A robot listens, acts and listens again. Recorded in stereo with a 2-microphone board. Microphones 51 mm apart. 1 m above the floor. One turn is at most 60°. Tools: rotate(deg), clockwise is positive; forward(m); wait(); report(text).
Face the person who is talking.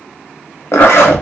wait()
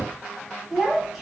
rotate(-30)
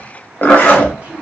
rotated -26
rotate(25)
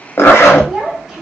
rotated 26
report("Facing the child speaking, 1 to 2 m away.")